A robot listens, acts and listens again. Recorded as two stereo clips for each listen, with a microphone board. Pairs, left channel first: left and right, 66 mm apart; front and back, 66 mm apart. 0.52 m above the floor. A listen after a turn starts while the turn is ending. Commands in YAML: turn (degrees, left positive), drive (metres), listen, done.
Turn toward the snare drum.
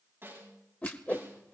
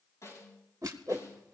turn: -40
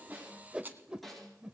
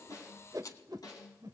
done: "Found it: a snare drum, straight ahead."